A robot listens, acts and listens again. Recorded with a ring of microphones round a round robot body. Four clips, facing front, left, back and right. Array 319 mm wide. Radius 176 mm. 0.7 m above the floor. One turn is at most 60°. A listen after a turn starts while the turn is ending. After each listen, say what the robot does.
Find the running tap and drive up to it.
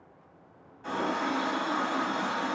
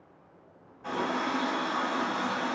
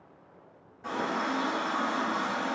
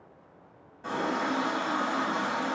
Turn 60° right.
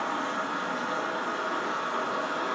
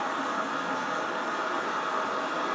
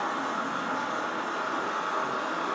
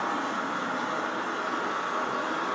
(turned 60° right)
Turn 50° right.
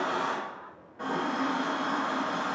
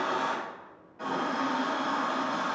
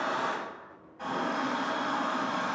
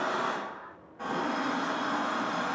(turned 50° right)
Turn 15° left.
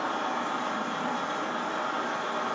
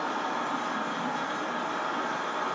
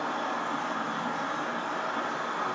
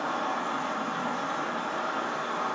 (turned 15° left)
Drive 1.0 m forward.
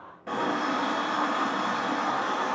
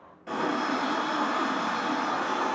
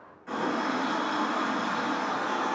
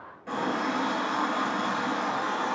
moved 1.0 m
Turn 10° left.
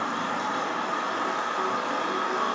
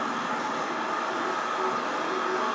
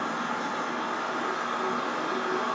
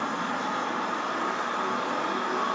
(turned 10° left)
Drive 1.0 m forward.
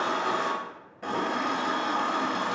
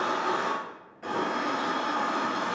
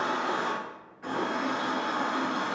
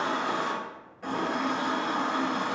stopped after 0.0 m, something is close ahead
Arrived at the running tap, straight ahead.